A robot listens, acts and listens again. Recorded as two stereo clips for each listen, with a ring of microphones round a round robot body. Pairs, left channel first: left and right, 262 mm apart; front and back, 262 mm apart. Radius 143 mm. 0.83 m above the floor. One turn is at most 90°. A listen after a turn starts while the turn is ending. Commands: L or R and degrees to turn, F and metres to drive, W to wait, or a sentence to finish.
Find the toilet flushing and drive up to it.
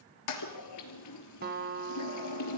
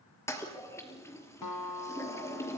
L80
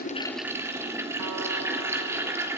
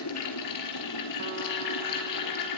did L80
R10
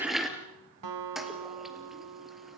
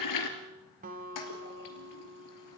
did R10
F1.0
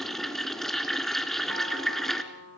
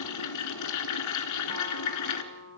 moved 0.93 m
F1.0
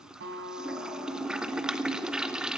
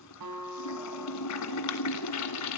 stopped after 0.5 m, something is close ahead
I am next to the toilet flushing.